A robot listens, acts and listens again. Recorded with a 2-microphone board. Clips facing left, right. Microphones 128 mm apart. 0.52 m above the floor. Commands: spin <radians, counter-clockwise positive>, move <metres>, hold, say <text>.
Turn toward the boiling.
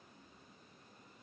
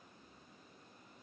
hold
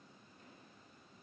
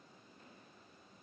hold
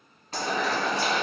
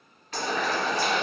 spin 0.61
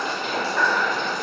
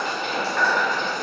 say Found it: boiling, straight ahead.